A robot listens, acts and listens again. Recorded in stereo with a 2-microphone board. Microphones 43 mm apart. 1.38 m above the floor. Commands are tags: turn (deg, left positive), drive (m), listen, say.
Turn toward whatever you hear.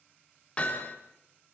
<turn deg="30"/>
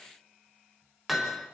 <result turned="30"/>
<say>Facing the hammering.</say>